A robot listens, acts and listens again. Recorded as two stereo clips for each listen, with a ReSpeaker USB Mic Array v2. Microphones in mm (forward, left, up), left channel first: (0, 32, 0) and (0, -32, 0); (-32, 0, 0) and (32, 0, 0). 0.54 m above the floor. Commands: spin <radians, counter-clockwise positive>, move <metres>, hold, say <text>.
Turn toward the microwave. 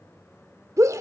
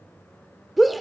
hold
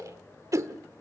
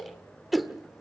hold
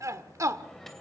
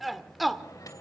spin 3.05
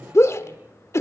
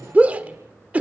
hold
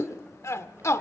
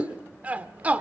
hold
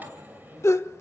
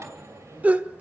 spin -0.52
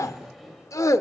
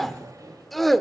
say Found it: a microwave, straight ahead.